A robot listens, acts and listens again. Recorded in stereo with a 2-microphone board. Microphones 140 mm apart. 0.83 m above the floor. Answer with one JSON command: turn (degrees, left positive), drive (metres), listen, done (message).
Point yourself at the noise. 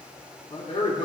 {"turn": 55}
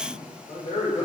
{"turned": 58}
{"turn": 50}
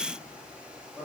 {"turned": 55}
{"turn": -10}
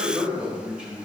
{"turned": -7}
{"turn": -10}
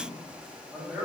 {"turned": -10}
{"done": "Found it: a man speaking, straight ahead."}